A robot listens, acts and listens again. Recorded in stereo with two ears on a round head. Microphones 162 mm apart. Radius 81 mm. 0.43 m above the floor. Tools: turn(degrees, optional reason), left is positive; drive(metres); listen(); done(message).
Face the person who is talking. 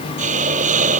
listen()
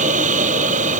listen()
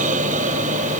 done("I can't make out anyone speaking to turn to.")